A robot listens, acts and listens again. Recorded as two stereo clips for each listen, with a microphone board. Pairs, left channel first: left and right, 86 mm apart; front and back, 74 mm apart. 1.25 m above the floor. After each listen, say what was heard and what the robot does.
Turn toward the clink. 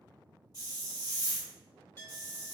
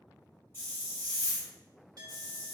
The clink: 150° left. Turn 150° left.
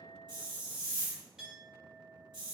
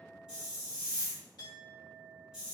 Found it: a clink, straight ahead.